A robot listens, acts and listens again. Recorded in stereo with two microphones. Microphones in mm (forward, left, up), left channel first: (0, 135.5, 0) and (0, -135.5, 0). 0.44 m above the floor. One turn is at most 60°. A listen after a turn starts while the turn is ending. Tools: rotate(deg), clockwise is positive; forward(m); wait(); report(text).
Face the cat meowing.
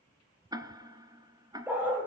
wait()
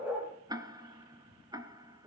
wait()
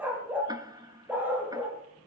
report("I can't make out a cat meowing to turn to.")